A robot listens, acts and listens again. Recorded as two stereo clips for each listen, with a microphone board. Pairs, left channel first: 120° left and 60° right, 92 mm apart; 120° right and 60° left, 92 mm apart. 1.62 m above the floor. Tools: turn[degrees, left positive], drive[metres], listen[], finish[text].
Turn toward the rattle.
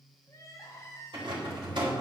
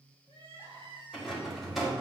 Thought: The rattle: 30° right.
Action: turn[-30]
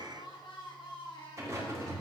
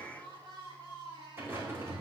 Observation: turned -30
Action: finish[Found it: a rattle, straight ahead.]